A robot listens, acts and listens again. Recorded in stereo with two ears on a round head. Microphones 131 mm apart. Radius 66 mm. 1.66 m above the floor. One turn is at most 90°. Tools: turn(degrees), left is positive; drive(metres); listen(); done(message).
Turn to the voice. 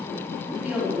turn(degrees=-30)
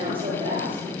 turn(degrees=-90)
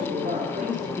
turn(degrees=-55)
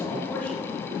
listen()
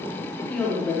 turn(degrees=10)
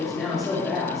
done("Found it: a woman speaking, straight ahead, over 4 m away.")